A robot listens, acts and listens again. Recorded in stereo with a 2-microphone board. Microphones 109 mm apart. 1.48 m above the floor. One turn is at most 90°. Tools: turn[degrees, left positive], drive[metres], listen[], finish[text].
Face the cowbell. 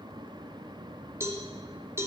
Thought: The cowbell: about 25° right or 155° right.
Action: turn[-25]
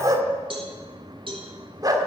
Thought: So it is at 125° right.
Action: turn[-90]
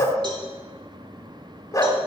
Thought: Nothing new. It was at 35° right.
Action: turn[-35]
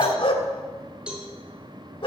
Thought: The cowbell is now 10° right.
Action: turn[-10]
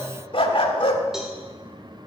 Action: listen[]
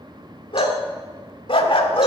Action: listen[]
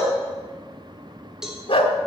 Action: finish[Facing the cowbell.]